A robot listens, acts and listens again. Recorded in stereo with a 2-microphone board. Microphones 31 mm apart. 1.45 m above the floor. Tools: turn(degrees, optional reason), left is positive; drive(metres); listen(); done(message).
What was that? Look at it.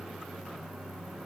listen()
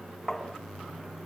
turn(degrees=20, reason="The tapping: about 20° left or 160° left.")
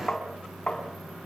turn(degrees=145, reason="So it is at 145° left.")
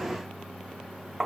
turn(degrees=-10, reason="The tapping is now 10° right.")
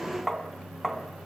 done("Facing the tapping.")